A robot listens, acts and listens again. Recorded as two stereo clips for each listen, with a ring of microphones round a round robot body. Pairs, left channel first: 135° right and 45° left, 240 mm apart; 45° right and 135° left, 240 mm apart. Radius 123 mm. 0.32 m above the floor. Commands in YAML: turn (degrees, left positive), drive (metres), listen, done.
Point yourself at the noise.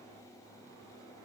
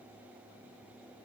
listen: true
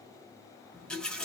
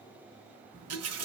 turn: 140
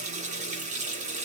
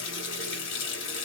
turn: -15
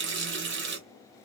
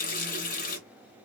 done: "Facing the running tap."